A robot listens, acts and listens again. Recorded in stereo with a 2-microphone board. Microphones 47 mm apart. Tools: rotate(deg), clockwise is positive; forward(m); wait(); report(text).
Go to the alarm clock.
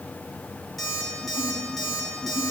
rotate(-30)
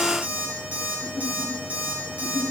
rotate(30)
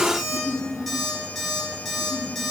forward(1.0)
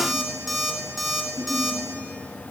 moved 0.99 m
forward(1.0)
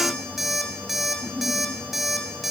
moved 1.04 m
forward(1.0)
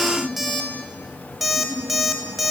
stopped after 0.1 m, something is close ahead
report("Arrived at the alarm clock, straight ahead.")